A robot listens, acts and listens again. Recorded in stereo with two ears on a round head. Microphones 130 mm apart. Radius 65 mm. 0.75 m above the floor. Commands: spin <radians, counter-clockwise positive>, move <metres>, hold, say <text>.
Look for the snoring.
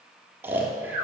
spin -0.52
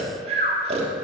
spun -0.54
spin -2.36
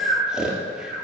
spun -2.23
say Facing the snoring.